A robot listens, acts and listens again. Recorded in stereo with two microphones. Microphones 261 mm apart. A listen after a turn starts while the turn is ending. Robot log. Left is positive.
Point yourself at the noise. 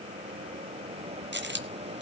note: The dropped coin: about 45° right or 135° right.
cmd yaw -45
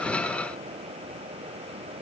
cmd idle
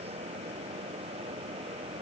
end: I heard a dropped coin, but can't make it out now. It was about straight ahead or 90° right.